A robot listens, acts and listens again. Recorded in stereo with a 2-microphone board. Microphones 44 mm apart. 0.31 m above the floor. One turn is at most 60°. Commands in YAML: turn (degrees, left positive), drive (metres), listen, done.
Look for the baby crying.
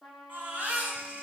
turn: -40
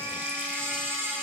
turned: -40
turn: -60
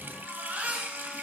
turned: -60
turn: -40
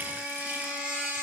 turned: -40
turn: -25
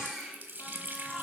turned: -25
turn: -10
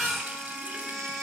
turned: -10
done: "Facing the baby crying."